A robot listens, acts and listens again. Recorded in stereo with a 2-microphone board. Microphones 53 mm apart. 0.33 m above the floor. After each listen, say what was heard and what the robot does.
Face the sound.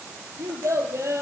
The child speaking: about 65° right or 115° right. Turn 65° right.
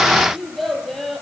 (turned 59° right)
Facing the child speaking, over 4 m away.